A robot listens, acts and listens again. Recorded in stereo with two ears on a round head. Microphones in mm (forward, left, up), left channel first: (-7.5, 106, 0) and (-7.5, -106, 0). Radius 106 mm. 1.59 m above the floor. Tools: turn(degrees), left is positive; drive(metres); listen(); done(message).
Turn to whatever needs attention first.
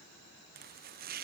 listen()
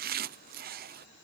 listen()
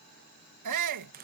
turn(degrees=-90)
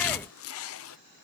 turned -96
listen()
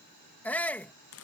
done("Found it: a shout, straight ahead.")